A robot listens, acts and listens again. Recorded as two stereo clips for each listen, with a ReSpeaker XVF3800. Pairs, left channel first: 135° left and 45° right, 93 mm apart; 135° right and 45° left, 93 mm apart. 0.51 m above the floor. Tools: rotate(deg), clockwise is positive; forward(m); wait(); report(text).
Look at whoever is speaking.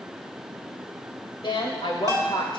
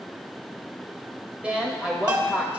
rotate(-120)
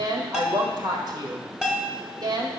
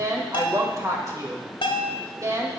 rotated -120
rotate(10)
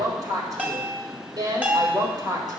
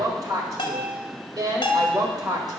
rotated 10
report("Found it: a woman speaking, straight ahead, 1 to 2 m away.")